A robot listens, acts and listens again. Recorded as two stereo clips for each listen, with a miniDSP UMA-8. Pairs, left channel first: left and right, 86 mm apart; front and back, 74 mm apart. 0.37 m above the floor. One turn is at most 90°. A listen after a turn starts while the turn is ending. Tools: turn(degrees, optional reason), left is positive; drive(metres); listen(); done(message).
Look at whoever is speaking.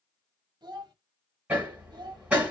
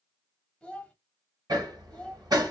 turn(degrees=-75, reason="The child speaking: 75° right.")
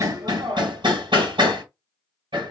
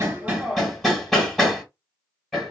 listen()
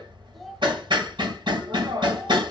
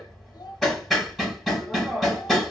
listen()
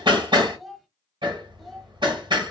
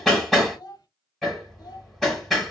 done("Found it: a child speaking, straight ahead.")